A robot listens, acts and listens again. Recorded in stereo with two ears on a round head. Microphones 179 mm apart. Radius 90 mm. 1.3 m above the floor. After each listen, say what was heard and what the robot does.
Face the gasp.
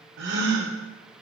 The gasp: about 60° right or 120° right. Turn 60° right.
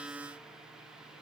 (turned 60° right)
Keep listening.
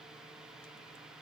I heard a gasp, but can't make it out now. It was about straight ahead or 60° right.